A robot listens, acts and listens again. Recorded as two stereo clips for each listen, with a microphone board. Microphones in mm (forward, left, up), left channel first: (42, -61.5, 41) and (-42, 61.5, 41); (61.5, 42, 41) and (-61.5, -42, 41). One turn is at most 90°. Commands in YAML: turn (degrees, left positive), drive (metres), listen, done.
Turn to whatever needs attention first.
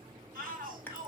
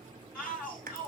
turn: 90
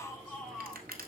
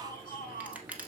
turn: 40
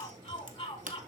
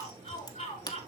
done: "Found it: a shout, straight ahead, 2 to 4 m away."